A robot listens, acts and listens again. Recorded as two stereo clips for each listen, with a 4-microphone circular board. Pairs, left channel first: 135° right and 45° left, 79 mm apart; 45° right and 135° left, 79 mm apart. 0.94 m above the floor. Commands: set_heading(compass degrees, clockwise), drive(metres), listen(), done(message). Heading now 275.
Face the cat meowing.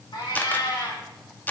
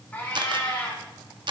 set_heading(30)
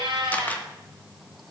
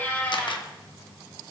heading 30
set_heading(10)
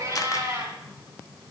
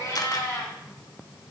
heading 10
done("Found it: a cat meowing, straight ahead.")